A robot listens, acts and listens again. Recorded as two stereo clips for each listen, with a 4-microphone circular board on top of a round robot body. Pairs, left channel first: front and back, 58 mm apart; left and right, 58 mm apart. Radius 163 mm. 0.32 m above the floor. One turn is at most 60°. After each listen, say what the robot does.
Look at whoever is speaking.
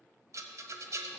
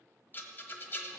Keep listening.
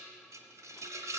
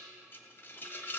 Keep listening.
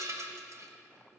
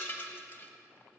I can't make out anyone speaking to turn to.